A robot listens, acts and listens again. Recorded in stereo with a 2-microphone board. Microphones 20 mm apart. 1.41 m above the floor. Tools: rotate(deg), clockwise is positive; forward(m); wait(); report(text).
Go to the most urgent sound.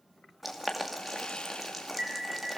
rotate(60)
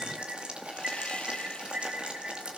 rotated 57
rotate(60)
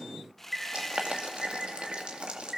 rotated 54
forward(1.0)
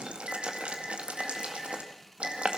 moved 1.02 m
rotate(10)
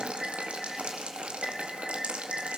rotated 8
forward(1.0)
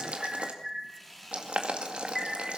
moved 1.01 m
forward(1.0)
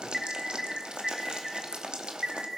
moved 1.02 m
forward(1.0)
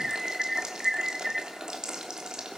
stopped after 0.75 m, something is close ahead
rotate(10)
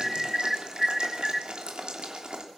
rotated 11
report("I am next to the alarm.")